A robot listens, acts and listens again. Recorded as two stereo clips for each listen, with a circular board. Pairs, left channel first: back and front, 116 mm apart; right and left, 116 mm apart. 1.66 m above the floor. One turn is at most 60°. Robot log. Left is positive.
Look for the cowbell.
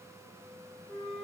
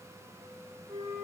cmd idle
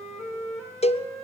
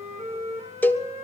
note: The cowbell: 165° right.
cmd yaw -60
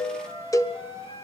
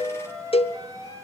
note: The cowbell is now 120° right.
cmd yaw -60
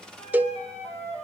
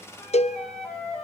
note: The cowbell is now 75° right.
cmd yaw -60
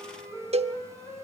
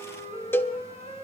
note: The cowbell is now 20° right.
cmd yaw -20
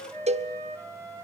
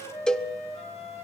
note: The cowbell is now 10° right.
cmd yaw -10
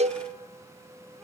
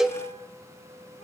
end: Facing the cowbell, 1 to 2 m away.